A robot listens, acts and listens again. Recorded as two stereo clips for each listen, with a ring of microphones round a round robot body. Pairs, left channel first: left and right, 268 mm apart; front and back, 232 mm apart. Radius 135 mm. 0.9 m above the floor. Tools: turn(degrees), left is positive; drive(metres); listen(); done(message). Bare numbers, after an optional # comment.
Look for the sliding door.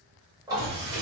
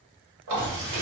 # The sliding door: 120° right.
turn(-120)
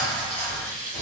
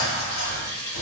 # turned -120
done("Facing the sliding door.")